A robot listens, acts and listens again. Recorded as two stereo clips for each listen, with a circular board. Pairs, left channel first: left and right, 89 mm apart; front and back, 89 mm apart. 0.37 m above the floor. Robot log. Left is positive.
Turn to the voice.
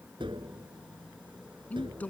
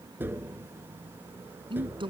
note: The man speaking: 165° left.
cmd yaw +165
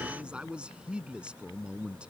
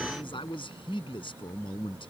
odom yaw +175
note: The man speaking is now 10° right.
cmd yaw -10
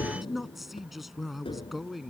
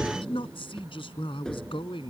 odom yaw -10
end: Facing the man speaking.